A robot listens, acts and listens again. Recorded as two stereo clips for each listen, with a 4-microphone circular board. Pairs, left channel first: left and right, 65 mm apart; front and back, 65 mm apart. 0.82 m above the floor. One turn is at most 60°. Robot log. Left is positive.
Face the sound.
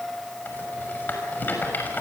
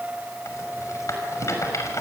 note: The rattle: 35° left.
cmd yaw +35
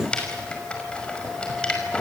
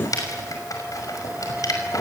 note: The rattle is now 20° left.
cmd yaw +20
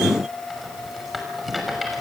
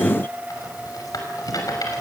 end: Facing the rattle.